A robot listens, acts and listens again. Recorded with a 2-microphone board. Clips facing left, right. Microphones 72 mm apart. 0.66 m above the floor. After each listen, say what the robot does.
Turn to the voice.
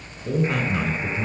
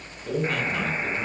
Turn 20° left.
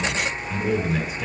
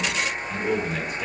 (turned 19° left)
Facing the man speaking, 2 to 4 m away.